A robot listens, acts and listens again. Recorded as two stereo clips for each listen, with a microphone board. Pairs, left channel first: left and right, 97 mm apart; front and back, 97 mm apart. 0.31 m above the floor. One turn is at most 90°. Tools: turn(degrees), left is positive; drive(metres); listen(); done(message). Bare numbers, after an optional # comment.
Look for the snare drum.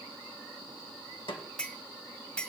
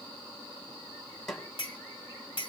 # The snare drum: 85° left.
turn(85)
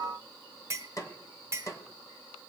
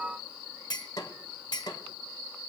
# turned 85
# The snare drum is now 40° left.
turn(40)
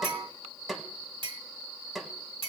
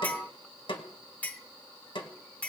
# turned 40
done("Found it: a snare drum, straight ahead, 1 to 2 m away.")